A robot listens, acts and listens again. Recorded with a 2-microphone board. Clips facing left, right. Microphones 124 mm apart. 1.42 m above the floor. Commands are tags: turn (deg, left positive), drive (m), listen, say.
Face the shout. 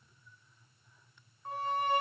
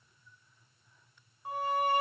<listen/>
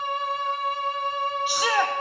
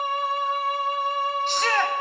<turn deg="30"/>
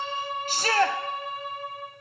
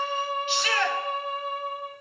<turn deg="140"/>
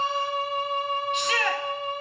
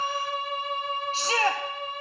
<turn deg="-35"/>
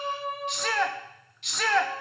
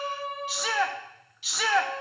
<say>Facing the shout, under 1 m away.</say>